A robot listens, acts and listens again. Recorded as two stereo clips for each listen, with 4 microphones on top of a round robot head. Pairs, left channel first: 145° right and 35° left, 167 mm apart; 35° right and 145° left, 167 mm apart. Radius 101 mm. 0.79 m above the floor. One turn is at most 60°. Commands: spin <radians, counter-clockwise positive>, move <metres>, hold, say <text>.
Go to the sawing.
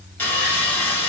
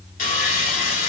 spin -1.05
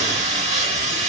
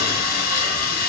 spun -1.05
spin -0.17
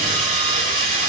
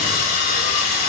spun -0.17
move 1.0
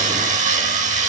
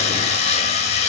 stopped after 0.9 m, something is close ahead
say Arrived at the sawing, straight ahead.